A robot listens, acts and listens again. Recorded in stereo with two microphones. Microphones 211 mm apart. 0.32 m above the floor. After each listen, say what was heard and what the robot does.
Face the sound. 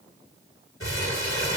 The crumpling: about 70° left or 110° left. Turn 70° left.
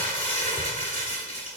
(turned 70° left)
So it is at 35° left. Turn 35° left.
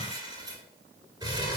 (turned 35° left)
The crumpling is now 15° right. Turn 15° right.
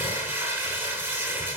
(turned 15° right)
The crumpling is now 10° right. Turn 10° right.
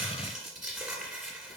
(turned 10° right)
Found it: crumpling, straight ahead, 1 to 2 m away.